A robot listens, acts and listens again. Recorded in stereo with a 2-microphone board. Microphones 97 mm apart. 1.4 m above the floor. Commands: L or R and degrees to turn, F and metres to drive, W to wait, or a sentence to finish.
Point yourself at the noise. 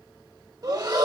R40
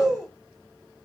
Facing the breathing.